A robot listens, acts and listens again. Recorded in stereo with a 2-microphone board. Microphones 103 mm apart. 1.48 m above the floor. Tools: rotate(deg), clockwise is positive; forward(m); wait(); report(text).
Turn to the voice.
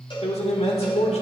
rotate(-90)
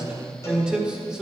rotate(10)
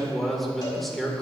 report("Found it: a man speaking, straight ahead.")